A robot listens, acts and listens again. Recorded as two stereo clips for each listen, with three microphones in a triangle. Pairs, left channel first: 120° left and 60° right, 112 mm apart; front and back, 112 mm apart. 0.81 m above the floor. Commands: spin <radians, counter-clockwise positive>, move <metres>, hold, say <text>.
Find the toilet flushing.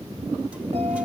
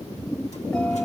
hold
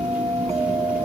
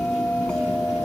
hold
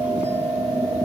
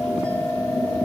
say I can't make out a toilet flushing to turn to.